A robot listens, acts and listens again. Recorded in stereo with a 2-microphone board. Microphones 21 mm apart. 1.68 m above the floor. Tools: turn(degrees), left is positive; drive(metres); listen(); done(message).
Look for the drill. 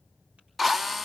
turn(degrees=-30)
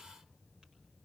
listen()
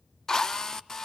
turn(degrees=20)
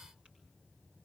listen()
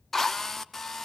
turn(degrees=10)
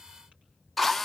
done("Found it: a drill, straight ahead, under 1 m away.")